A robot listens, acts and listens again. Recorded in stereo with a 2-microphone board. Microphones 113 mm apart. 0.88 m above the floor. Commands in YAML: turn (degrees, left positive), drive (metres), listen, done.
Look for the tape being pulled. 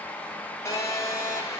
listen: true
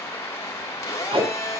turn: -55
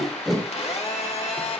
done: "Found it: tape being pulled, straight ahead, 2 to 4 m away."